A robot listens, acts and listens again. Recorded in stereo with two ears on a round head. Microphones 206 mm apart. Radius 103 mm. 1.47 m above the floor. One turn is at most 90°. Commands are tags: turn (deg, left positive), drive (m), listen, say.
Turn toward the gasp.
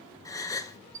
<turn deg="30"/>
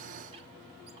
<listen/>
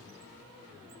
<say>I heard a gasp, but can't make it out now. It was about 15° right or 135° left.</say>